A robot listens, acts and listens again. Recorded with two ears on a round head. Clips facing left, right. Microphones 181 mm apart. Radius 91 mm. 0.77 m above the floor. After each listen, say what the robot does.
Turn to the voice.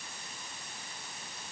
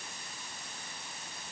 Keep listening.
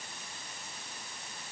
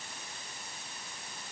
Keep listening.
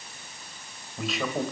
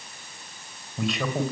Turn 30° left.
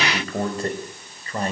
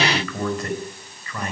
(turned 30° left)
Turn 150° left.
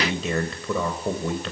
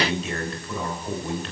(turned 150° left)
Turn 70° left.
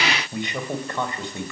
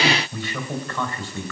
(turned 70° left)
Turn 20° left.
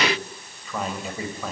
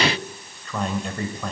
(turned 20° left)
Found it: a man speaking, straight ahead.